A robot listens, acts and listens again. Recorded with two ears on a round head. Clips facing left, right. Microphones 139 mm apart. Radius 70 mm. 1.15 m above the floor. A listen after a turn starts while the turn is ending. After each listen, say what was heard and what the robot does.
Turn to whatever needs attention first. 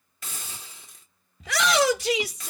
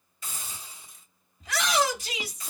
The shout: about 55° left or 125° left. Turn 55° left.
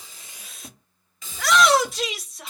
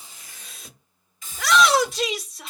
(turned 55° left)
Found it: a shout, straight ahead.